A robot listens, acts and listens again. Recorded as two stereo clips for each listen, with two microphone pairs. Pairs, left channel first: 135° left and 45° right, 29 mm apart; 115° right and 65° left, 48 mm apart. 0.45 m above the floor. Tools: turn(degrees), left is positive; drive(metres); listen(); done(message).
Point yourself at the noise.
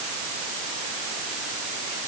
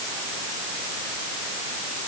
listen()
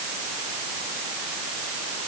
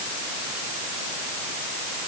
listen()
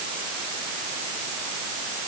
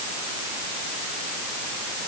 done("I can't make out anything to turn to.")